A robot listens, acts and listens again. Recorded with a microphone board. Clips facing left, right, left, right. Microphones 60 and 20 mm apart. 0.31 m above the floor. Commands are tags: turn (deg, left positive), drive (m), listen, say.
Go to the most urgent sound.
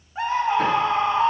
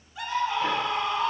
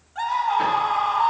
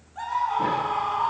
<turn deg="40"/>
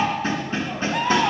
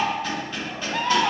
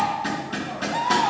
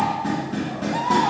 <turn deg="10"/>
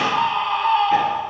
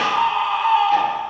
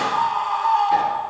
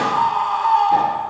<drive m="1.0"/>
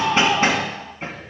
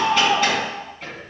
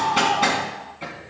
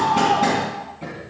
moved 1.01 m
<turn deg="-15"/>
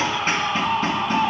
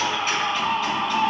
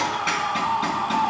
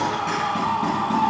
<drive m="1.0"/>
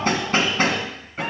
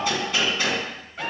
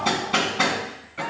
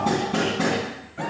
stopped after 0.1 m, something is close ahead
<listen/>
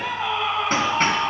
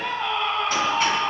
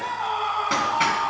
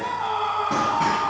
<say>Arrived at the scream, straight ahead.</say>